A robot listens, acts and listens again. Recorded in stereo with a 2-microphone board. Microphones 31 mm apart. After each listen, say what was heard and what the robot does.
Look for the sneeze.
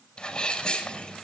The sneeze: about 30° left or 150° left. Turn 30° left.
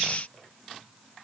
Keep listening.
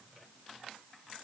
I heard a sneeze, but can't make it out now. It was about straight ahead or 120° left.